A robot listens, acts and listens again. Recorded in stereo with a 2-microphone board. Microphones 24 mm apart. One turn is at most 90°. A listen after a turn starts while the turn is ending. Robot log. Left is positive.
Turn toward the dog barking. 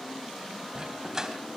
note: The dog barking: about 20° right or 160° right.
cmd yaw -20
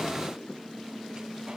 cmd idle
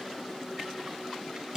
note: The dog barking: about 30° right or 150° right.
cmd yaw -30
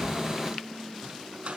note: So it is at 120° right.
cmd yaw -90
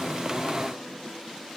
note: Nothing new. It was at 30° right.
cmd yaw -30
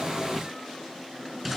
note: The dog barking is now 10° right.
cmd yaw -10
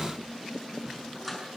end: Found it: a dog barking, straight ahead.